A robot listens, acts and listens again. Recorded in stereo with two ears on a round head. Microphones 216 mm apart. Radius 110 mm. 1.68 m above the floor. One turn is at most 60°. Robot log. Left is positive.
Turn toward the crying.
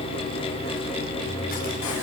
cmd idle
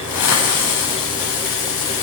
cmd idle
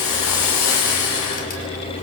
end: I can't make out crying to turn to.